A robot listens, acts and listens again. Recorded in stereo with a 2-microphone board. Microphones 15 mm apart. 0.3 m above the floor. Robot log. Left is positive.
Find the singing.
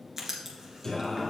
note: The singing: about 20° left or 160° left.
cmd yaw +20
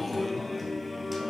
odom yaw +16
note: So it is at 15° right.
cmd yaw -15
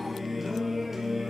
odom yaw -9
note: The singing is now 30° right.
cmd yaw -30
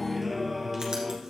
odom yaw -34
note: The singing is now 25° right.
cmd yaw -25
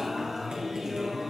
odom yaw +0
note: The singing is now 35° right.
cmd yaw -35
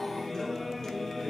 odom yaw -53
note: The singing is now 20° left.
cmd yaw +20
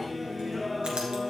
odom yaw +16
end: Facing the singing, 1 to 2 m away.